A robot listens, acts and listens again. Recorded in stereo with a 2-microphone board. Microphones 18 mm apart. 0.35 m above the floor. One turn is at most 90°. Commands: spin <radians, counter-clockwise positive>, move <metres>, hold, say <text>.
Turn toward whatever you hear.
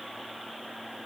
hold
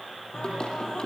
spin 0.87
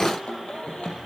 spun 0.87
spin 1.40
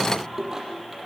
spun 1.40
spin -0.26
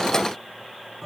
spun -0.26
say Found it: singing, straight ahead.